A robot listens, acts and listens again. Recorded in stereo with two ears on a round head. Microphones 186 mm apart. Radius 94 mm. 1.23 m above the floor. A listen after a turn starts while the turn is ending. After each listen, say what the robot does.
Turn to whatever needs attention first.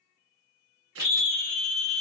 Turn 65° left.
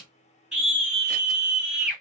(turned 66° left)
Found it: a scream, straight ahead.